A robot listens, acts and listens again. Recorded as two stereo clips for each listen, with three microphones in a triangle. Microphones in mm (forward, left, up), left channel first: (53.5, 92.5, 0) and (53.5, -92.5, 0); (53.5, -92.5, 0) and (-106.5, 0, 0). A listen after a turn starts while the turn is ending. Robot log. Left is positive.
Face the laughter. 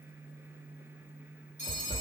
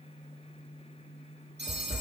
cmd idle
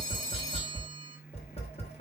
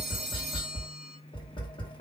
cmd idle
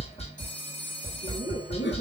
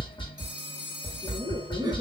note: The laughter: 80° left.
cmd yaw +80
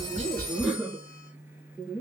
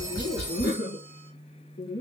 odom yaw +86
end: Facing the laughter.